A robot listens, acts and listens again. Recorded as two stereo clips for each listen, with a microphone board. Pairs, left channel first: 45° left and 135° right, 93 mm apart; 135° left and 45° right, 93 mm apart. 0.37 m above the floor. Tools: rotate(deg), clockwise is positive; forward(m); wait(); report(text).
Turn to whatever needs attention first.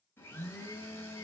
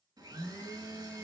wait()
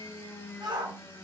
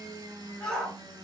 rotate(145)
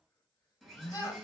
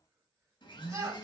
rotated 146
report("Facing the shout, 1 to 2 m away.")